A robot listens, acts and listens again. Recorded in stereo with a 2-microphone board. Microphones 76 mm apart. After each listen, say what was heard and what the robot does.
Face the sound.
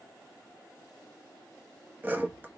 The sawing: about 25° right or 155° right. Turn 25° right.
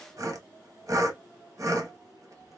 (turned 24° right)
So it is at 130° right. Turn 130° right.
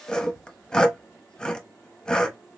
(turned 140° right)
The sawing is now 10° left. Turn 10° left.
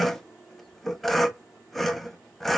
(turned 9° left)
Facing the sawing.